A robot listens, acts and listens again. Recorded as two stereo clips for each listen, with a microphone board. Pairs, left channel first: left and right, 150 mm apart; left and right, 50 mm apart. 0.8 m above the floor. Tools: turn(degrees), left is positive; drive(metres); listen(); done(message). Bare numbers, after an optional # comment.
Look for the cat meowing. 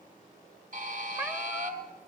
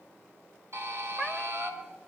# The cat meowing: about 20° right or 160° right.
turn(-20)
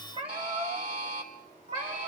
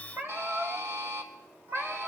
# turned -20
# So it is at 135° right.
turn(-135)
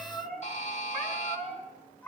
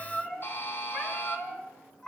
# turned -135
# The cat meowing is now 10° left.
turn(10)
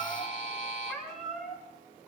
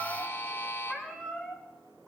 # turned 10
done("Facing the cat meowing.")